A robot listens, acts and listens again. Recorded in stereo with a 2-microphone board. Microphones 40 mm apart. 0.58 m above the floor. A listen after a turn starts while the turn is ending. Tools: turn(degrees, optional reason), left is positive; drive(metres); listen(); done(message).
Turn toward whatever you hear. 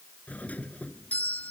turn(degrees=40, reason="The doorbell: about 40° left or 140° left.")
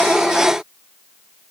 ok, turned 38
listen()
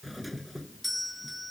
done("Facing the doorbell.")